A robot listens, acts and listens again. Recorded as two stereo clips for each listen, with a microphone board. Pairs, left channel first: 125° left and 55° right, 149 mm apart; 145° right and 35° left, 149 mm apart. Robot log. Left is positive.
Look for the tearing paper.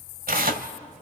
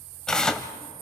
note: The tearing paper: 60° right.
cmd yaw -60
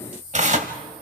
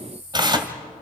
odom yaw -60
note: The tearing paper is now 25° right.
cmd yaw -25
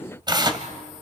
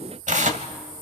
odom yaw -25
end: Facing the tearing paper, 1 to 2 m away.